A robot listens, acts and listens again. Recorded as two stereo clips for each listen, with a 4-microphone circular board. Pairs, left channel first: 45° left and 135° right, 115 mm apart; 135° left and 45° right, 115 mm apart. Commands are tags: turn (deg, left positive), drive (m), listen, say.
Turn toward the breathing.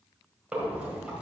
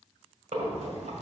<turn deg="-55"/>
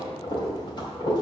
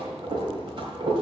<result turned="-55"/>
<say>Facing the breathing, 2 to 4 m away.</say>